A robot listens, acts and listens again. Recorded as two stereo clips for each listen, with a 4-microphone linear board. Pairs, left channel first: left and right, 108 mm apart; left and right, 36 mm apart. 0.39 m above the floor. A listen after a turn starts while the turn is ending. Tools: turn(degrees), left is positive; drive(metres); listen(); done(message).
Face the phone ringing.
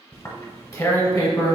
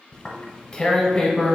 listen()
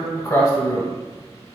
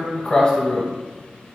listen()
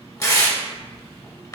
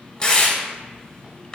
done("I can't make out a phone ringing, only tearing paper.")